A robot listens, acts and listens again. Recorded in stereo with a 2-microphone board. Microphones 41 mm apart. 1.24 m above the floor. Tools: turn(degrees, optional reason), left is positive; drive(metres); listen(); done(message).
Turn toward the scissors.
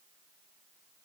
listen()
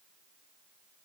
listen()
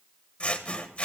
turn(degrees=35, reason="The scissors: about 35° left or 145° left.")
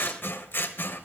turn(degrees=110, reason="So it is at 110° left.")
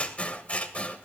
turn(degrees=30, reason="The scissors is now 30° left.")
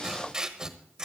turn(degrees=-20, reason="The scissors is now 20° right.")
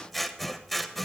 done("Found it: scissors, straight ahead, 1 to 2 m away.")